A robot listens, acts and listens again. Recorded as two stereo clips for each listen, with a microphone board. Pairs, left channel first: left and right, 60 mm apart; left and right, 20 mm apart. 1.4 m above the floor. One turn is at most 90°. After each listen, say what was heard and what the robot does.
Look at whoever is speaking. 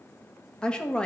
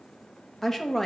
Turn 30° left.
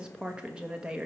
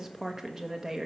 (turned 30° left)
So it is at 15° right. Turn 15° right.
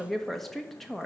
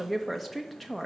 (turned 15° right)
Found it: a woman speaking, straight ahead.